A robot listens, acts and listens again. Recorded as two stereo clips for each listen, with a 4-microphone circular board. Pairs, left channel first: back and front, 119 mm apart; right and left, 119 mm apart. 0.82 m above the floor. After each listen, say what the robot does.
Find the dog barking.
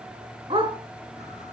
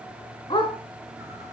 Turn 45° right.
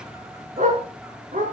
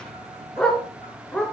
Found it: a dog barking, straight ahead.